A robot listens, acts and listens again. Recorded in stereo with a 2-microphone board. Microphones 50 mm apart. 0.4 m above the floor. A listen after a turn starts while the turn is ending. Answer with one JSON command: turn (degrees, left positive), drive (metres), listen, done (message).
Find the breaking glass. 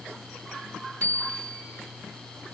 {"listen": true}
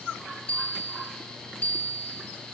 {"listen": true}
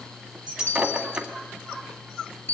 {"turn": -20}
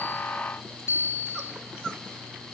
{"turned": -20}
{"listen": true}
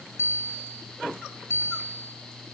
{"done": "I heard breaking glass, but can't make it out now. It was about straight ahead or 140° right."}